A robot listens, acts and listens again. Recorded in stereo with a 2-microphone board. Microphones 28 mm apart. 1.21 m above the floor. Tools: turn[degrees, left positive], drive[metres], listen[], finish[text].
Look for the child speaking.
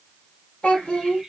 Thought: The child speaking: about 40° left or 140° left.
Action: turn[40]
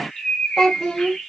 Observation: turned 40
Action: finish[Found it: a child speaking, straight ahead.]